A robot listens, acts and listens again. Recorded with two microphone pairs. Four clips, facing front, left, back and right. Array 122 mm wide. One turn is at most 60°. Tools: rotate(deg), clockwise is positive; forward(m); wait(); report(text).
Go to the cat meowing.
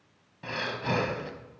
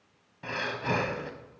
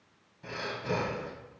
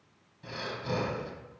wait()
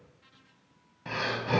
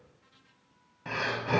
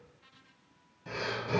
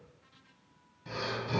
wait()
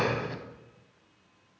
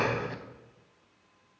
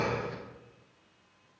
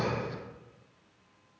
report("I can't make out a cat meowing to turn to.")